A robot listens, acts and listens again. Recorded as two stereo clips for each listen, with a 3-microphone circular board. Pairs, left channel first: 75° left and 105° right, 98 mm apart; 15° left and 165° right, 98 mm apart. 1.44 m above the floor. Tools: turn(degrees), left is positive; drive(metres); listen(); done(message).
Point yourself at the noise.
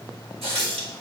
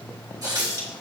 turn(degrees=-115)
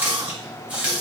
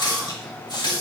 turn(degrees=-30)
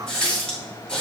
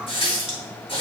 done("Found it: a running tap, straight ahead, 1 to 2 m away.")